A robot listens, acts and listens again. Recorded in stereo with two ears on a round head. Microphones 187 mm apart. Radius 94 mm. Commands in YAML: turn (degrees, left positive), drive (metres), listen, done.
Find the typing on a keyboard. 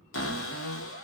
listen: true
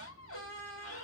listen: true
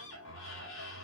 done: "I can't make out typing on a keyboard, only a cupboard door."